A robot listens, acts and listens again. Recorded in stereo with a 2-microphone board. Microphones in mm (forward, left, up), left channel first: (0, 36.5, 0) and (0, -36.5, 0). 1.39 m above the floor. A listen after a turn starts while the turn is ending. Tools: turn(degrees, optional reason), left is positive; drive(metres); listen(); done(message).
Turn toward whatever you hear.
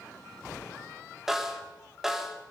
turn(degrees=-30)
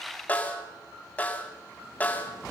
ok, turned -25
turn(degrees=20, reason="So it is at 20° left.")
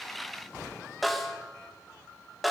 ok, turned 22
done("Facing the snare drum, 2 to 4 m away.")